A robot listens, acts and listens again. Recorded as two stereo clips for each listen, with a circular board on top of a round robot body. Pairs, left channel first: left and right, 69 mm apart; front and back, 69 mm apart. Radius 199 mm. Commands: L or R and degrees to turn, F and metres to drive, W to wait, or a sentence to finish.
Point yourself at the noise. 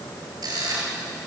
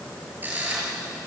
R115
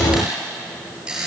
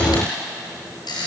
R15
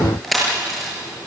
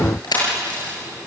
Found it: a camera shutter, straight ahead, over 4 m away.